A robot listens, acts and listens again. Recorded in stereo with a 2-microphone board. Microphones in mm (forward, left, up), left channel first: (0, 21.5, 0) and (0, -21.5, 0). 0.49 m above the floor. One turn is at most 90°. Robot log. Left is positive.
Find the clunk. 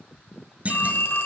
note: The clunk: about 30° right or 150° right.
cmd yaw -30
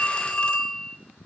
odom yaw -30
cmd idle
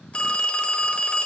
end: I heard a clunk, but can't make it out now. It was about straight ahead or 120° right.